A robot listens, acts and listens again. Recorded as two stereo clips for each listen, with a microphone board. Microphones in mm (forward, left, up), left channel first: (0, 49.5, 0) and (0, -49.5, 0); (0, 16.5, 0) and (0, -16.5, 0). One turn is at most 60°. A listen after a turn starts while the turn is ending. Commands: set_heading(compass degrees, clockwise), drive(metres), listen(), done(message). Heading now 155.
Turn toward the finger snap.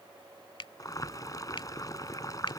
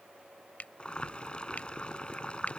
set_heading(95)
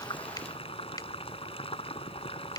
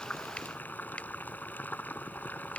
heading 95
listen()
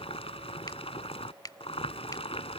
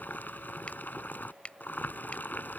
set_heading(45)
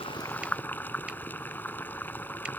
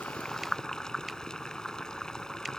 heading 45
listen()
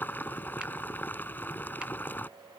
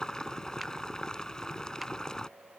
listen()
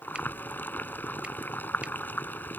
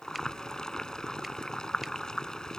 done("I heard a finger snap from this way, but can't make it out now.")